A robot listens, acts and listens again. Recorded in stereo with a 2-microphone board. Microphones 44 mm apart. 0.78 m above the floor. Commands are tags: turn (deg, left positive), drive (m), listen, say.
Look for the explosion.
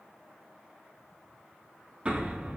<turn deg="-25"/>
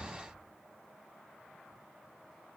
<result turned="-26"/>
<say>Found it: an explosion, straight ahead, 1 to 2 m away.</say>